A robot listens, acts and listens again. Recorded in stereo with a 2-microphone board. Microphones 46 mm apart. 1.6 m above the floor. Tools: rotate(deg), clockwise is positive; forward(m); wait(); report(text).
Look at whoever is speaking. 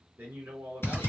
rotate(55)
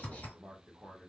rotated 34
rotate(20)
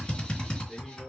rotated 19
report("Facing the man speaking.")